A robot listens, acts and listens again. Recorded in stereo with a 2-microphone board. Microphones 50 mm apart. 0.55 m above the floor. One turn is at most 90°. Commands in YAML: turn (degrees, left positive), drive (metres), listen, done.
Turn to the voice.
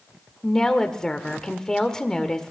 turn: 30
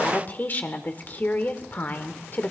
turn: 90
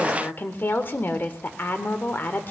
turn: 55
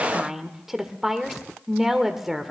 done: "Found it: a woman speaking, straight ahead, 1 to 2 m away."